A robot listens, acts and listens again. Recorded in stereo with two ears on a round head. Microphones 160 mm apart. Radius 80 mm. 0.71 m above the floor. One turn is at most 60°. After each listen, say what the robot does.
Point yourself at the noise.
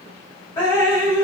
Turn 15° left.
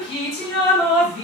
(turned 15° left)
Found it: dripping, straight ahead.